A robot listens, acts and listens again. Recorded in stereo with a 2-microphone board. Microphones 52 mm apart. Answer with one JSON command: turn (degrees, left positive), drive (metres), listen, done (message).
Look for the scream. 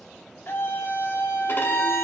{"turn": 50}
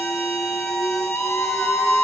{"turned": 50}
{"turn": 70}
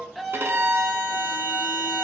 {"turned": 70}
{"done": "Facing the scream, under 1 m away."}